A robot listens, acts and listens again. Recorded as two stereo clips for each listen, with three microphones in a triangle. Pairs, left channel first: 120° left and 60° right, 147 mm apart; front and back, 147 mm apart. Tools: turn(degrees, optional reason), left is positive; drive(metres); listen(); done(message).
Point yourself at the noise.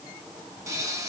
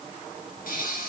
turn(degrees=10, reason="The pop: 10° left.")
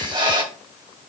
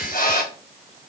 done("Facing the pop.")